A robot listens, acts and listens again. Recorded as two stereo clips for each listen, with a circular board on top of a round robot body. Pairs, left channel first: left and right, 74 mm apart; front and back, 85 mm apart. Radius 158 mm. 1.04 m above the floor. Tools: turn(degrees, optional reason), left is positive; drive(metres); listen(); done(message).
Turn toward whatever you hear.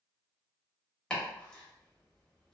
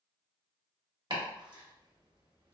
turn(degrees=165, reason="The chopping: 165° left.")
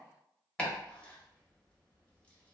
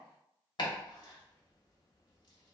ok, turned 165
turn(degrees=20, reason="The chopping is now 20° left.")
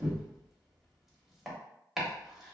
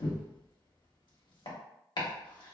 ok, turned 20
done("Facing the chopping, 1 to 2 m away.")